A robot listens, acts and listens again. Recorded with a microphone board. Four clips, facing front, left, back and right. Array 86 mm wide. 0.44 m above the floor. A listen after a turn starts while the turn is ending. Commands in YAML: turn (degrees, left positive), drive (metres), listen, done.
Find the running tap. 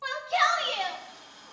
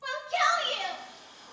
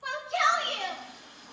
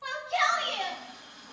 turn: -70
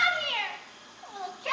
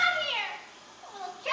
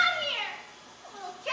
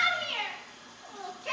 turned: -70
turn: -20
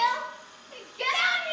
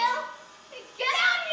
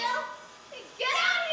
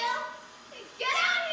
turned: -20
done: "Found it: a running tap, straight ahead, over 4 m away."